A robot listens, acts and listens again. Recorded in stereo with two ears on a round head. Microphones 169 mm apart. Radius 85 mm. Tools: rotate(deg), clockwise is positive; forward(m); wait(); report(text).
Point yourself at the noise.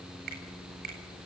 rotate(55)
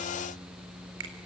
rotate(70)
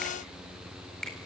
report("Found it: a finger snap, straight ahead.")